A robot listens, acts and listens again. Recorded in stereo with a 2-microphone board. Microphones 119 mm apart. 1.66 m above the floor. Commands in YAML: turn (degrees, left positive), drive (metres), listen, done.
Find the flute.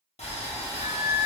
turn: 50
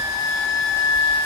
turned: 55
turn: 75
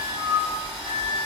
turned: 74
done: "Facing the flute."